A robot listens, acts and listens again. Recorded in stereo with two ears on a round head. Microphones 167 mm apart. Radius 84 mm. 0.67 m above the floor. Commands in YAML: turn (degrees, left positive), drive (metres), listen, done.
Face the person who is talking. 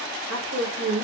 turn: -60
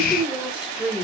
done: "Found it: a woman speaking, straight ahead, 1 to 2 m away."